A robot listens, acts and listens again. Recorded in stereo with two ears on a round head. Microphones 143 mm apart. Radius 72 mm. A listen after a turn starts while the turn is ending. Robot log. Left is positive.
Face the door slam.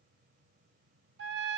cmd idle
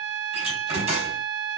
note: The door slam: about 40° right or 140° right.
cmd yaw -40
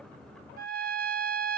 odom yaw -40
cmd idle
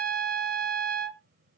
end: I heard a door slam, but can't make it out now. It was about straight ahead or 100° right.